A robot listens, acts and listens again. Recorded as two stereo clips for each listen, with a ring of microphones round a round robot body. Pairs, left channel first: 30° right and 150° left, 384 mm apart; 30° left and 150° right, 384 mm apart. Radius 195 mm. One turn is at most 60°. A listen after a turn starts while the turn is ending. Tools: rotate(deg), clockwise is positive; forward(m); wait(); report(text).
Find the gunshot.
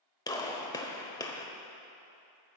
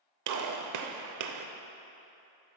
rotate(60)
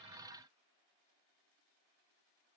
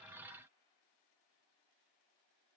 rotate(50)
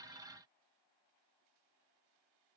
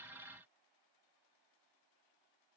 report("Facing where the gunshot came from. I can't hear it now.")